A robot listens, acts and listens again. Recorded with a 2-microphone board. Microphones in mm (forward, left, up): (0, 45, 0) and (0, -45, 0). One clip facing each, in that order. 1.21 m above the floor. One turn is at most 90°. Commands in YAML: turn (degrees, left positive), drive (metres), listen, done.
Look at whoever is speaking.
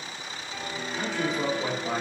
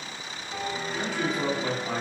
turn: 20
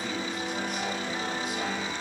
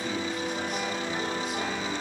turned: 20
listen: true
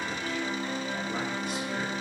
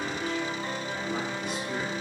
listen: true
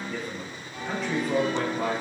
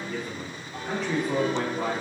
done: "Facing the man speaking."